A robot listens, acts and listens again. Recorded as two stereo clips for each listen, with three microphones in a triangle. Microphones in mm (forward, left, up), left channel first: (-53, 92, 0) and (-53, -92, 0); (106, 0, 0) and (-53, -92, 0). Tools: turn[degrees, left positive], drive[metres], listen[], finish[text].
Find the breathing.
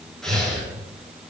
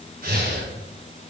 Thought: The breathing: straight behind.
Action: turn[180]
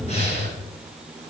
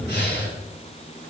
Thought: The breathing is now 40° left.
Action: turn[40]
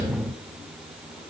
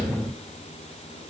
Action: listen[]
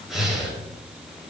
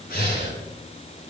Action: finish[Found it: breathing, straight ahead, over 4 m away.]